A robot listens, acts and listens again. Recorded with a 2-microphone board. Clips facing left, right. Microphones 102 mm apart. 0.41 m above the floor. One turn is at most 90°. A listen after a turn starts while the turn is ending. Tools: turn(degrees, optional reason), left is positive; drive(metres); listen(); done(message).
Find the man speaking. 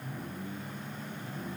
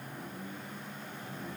listen()
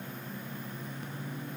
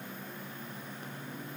listen()
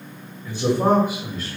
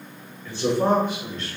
turn(degrees=30)
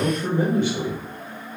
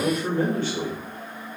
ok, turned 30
turn(degrees=30)
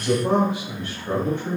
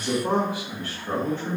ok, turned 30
turn(degrees=90, reason="So it is at 165° left.")
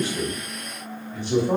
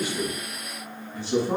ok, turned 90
turn(degrees=55, reason="The man speaking is now 55° left.")
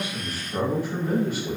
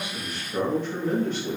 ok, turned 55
turn(degrees=10, reason="The man speaking is now 10° left.")
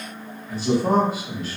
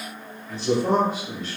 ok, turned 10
done("Facing the man speaking, 1 to 2 m away.")